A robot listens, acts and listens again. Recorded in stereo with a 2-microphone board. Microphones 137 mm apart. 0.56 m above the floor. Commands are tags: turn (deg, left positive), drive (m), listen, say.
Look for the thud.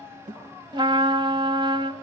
<turn deg="-70"/>
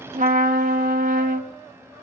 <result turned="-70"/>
<listen/>
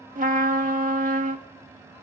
<say>I heard a thud, but can't make it out now. It was about straight ahead or 40° right.</say>